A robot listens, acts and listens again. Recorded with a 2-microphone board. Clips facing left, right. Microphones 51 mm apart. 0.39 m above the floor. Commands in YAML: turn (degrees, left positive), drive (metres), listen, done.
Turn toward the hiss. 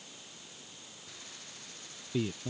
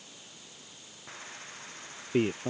turn: -35
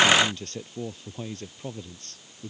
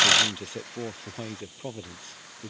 turn: -110
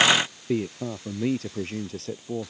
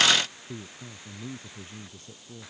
turn: -15
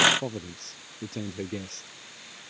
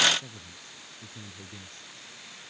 done: "Found it: a hiss, straight ahead."